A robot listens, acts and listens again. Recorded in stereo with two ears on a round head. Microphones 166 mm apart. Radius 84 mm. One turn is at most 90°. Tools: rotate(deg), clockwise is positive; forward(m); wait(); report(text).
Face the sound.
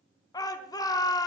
rotate(-20)
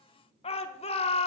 rotate(-90)
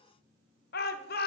rotate(-80)
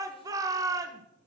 rotate(20)
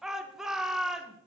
report("Found it: a shout, straight ahead.")